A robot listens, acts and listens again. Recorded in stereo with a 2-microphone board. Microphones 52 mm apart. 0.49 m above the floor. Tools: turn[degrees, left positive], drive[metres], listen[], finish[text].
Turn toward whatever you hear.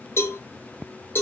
Thought: The cowbell: about 55° left or 125° left.
Action: turn[55]
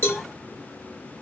Thought: So it is at 60° left.
Action: turn[60]
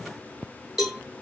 Action: finish[Found it: a cowbell, straight ahead.]